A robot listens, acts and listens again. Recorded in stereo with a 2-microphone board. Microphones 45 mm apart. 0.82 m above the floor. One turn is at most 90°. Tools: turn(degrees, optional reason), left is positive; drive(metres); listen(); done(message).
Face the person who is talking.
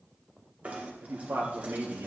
turn(degrees=-90)
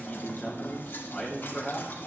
done("Found it: a man speaking, straight ahead, 2 to 4 m away.")